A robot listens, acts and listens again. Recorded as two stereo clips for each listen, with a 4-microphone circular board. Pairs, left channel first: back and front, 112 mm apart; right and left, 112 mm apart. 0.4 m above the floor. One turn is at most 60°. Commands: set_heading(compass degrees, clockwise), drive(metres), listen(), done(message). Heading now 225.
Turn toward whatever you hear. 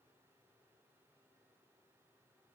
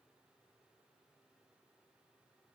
listen()
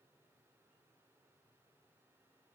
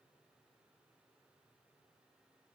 listen()
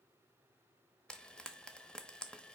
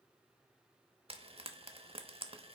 set_heading(165)
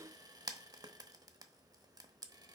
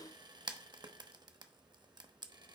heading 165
set_heading(115)
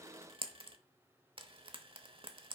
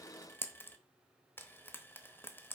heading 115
set_heading(135)
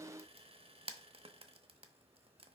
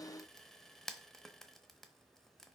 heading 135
done("Facing the frying, under 1 m away.")